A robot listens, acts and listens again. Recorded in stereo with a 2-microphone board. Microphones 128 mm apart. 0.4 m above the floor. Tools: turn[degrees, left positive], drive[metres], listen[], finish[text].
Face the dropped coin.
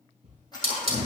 Thought: The dropped coin: about 30° left or 150° left.
Action: turn[30]
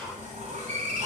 Action: listen[]
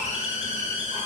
Action: finish[I heard a dropped coin, but can't make it out now. It was about straight ahead or 120° left.]